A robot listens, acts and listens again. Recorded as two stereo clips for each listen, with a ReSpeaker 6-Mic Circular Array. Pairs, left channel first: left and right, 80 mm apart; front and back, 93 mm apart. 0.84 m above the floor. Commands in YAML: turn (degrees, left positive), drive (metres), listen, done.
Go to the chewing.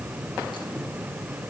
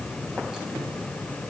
listen: true
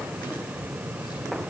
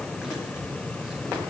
listen: true
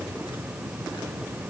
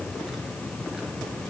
done: "I can't make out chewing."